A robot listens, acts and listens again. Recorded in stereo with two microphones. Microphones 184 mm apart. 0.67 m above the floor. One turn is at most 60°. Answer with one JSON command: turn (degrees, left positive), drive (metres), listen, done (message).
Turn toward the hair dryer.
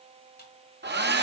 {"turn": -60}
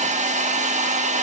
{"turn": -45}
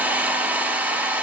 {"turn": -10}
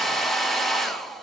{"done": "Facing the hair dryer."}